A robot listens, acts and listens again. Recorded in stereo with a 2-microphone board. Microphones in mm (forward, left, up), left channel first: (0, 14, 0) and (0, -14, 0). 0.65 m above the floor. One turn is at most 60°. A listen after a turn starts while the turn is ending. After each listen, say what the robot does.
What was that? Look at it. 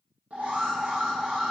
Turn 60° right.
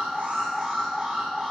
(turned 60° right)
Turn 15° right.
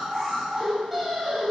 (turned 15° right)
Found it: an alarm, straight ahead, 1 to 2 m away.